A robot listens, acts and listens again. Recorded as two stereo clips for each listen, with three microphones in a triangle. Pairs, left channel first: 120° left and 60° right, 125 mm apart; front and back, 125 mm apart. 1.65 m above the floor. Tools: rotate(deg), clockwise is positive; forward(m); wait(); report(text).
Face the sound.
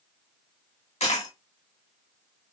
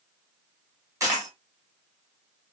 rotate(-120)
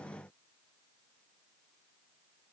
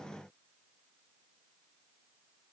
report("Facing where the dropped coin came from. I can't hear it now.")